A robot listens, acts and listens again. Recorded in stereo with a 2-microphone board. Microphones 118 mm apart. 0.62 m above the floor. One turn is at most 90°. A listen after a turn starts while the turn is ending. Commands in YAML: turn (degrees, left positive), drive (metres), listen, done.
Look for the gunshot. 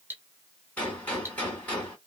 turn: 30
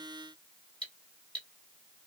listen: true
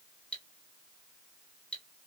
done: "I heard a gunshot, but can't make it out now. It was about 20° right or 140° left."